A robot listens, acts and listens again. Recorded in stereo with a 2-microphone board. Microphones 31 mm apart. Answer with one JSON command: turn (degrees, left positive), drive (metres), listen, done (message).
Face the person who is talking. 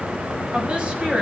{"turn": -40}
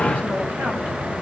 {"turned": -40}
{"listen": true}
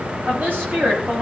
{"turn": -105}
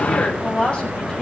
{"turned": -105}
{"turn": 35}
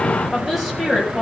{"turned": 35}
{"done": "Facing the woman speaking."}